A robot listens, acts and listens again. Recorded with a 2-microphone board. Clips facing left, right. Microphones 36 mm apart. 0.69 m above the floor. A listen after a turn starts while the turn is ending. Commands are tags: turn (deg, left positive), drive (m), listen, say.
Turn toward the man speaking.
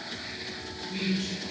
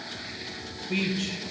<turn deg="-75"/>
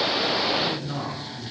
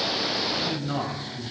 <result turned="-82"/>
<turn deg="-25"/>
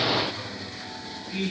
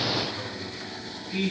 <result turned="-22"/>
<say>Facing the man speaking, over 4 m away.</say>